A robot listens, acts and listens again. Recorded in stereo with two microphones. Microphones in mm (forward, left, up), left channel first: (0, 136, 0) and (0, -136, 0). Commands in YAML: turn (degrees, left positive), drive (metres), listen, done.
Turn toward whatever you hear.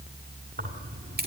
turn: -35
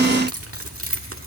turn: -130
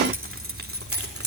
turn: -60
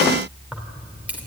done: "Found it: keys jangling, straight ahead."